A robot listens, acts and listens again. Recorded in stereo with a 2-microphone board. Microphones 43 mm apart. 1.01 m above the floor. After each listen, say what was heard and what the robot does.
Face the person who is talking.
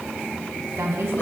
The woman speaking: about 70° right or 110° right. Turn 70° right.
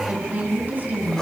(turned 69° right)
So it is at 40° right. Turn 40° right.
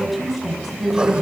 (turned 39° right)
Facing the woman speaking.